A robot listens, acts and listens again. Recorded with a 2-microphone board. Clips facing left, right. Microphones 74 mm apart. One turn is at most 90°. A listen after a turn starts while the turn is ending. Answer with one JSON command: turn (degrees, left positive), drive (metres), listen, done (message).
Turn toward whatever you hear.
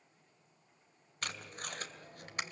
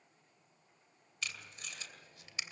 {"turn": 55}
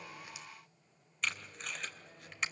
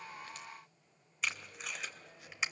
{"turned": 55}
{"done": "Found it: tape being pulled, straight ahead, 2 to 4 m away."}